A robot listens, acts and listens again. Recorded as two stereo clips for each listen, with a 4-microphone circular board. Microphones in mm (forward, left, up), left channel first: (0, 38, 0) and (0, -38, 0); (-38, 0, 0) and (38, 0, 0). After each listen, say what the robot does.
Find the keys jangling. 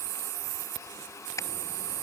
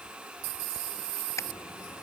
Keep listening.
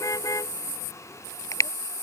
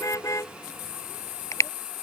Keep listening.
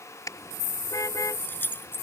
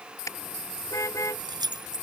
Turn 25° left.
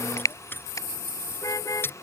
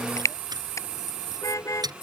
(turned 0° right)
Turn 30° left.
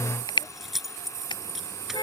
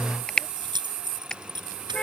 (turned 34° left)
Facing the keys jangling.